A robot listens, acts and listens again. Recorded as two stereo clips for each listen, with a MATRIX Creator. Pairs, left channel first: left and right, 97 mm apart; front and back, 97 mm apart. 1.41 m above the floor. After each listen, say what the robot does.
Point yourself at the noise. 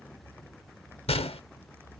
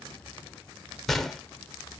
Turn 85° left.
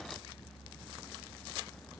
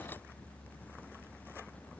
I heard a gunshot from this way, but can't make it out now.